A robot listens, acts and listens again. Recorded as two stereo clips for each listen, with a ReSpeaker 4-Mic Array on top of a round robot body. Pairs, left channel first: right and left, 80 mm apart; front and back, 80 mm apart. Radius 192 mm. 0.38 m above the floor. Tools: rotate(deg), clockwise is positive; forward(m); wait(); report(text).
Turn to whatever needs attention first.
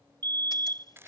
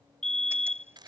rotate(-80)
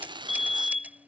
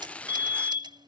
report("Facing the fire alarm.")